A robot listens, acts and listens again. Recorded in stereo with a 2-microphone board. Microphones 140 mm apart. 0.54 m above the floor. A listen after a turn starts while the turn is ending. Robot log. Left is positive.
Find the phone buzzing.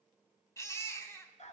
cmd idle
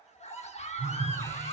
cmd yaw -30
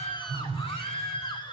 note: So it is at 140° right.
cmd yaw -140
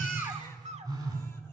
note: The phone buzzing is now 25° right.
cmd yaw -25
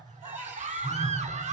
end: Found it: a phone buzzing, straight ahead.